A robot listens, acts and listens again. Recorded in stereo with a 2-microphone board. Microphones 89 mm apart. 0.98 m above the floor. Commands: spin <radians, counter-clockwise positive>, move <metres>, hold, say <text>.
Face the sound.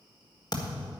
spin 0.87
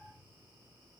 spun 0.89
hold
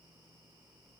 say I heard a thud, but can't make it out now. It was about 5° right or 80° left.